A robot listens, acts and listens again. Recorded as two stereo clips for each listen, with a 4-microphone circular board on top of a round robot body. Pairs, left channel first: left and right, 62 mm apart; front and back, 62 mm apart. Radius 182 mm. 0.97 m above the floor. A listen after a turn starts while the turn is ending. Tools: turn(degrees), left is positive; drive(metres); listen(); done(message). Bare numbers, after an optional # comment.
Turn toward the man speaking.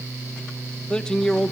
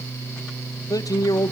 done("Facing the man speaking, 1 to 2 m away.")